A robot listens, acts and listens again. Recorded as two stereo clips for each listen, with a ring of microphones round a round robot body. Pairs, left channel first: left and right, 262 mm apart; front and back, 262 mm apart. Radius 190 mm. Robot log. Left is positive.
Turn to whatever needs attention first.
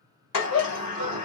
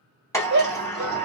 note: The shout: 135° left.
cmd yaw +135
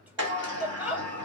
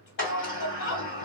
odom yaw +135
end: Found it: a shout, straight ahead.